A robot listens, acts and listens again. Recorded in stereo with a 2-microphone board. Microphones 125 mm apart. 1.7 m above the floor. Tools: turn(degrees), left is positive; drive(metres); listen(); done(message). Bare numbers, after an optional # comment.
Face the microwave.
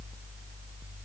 listen()
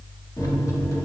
# The microwave: about 30° left or 150° left.
turn(30)
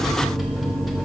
done("Facing the microwave, 1 to 2 m away.")